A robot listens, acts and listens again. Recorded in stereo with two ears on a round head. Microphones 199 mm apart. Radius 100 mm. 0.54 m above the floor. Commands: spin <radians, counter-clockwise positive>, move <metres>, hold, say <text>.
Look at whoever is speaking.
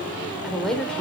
spin 0.52
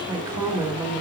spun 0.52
spin -0.17
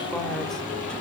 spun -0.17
hold
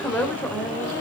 spin 0.17
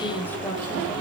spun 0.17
spin 0.17
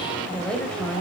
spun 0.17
say Found it: a woman speaking, straight ahead.